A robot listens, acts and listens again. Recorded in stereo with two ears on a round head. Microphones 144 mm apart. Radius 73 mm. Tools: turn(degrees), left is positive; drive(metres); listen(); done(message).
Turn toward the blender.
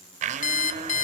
turn(degrees=-50)
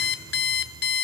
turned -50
listen()
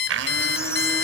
turn(degrees=-85)
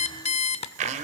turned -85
turn(degrees=-45)
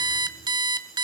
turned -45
listen()
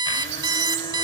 listen()
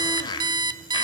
turn(degrees=25)
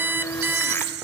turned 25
turn(degrees=10)
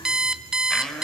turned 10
done("Facing the blender.")